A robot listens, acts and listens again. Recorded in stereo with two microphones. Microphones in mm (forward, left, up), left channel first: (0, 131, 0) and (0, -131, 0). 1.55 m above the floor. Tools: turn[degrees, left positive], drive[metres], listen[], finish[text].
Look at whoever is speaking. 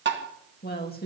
Thought: The woman speaking: about 35° left or 145° left.
Action: turn[35]
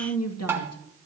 Thought: So it is at 105° left.
Action: turn[105]
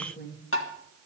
Thought: The woman speaking is now 35° left.
Action: turn[35]
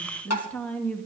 Action: finish[Facing the woman speaking, 1 to 2 m away.]